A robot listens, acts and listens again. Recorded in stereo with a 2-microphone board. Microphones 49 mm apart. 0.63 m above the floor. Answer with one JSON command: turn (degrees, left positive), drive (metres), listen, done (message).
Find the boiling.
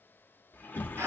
{"listen": true}
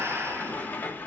{"listen": true}
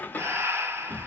{"done": "I can't make out boiling to turn to."}